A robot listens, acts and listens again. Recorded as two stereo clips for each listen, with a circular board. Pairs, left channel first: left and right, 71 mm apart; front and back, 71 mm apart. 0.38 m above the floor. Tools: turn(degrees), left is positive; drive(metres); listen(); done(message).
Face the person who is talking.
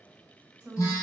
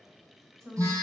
turn(degrees=-140)
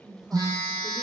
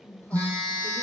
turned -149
turn(degrees=-15)
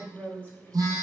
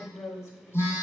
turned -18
turn(degrees=-40)
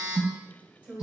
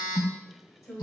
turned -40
turn(degrees=-25)
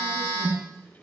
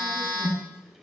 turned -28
listen()
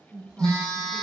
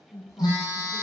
turn(degrees=-10)
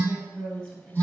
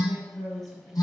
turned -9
done("Found it: a woman speaking, straight ahead, 1 to 2 m away.")